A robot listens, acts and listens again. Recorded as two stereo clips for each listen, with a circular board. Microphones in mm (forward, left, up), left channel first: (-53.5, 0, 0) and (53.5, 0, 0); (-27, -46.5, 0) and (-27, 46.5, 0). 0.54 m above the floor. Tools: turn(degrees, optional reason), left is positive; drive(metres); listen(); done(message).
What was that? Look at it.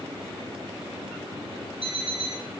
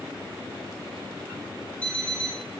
turn(degrees=-15, reason="The alarm clock: 15° right.")
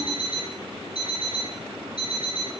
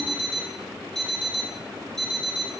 done("Found it: an alarm clock, straight ahead.")